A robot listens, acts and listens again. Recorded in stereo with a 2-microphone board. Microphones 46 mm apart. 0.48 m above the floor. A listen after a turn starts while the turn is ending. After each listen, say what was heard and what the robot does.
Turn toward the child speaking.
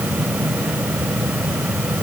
Keep listening.
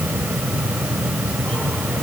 Keep listening.
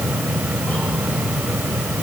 I can't make out a child speaking to turn to.